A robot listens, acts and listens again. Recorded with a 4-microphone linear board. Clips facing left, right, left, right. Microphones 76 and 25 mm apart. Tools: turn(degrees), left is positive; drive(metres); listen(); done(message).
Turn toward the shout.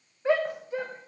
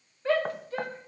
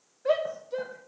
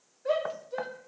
turn(degrees=15)
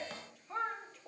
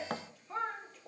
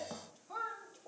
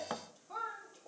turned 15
done("Facing the shout.")